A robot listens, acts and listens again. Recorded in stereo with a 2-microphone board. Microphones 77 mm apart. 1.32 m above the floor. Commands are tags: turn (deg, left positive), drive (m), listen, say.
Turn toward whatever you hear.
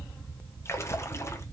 <turn deg="35"/>
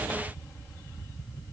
<listen/>
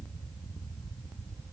<say>I heard a splash, but can't make it out now. It was about straight ahead or 110° left.</say>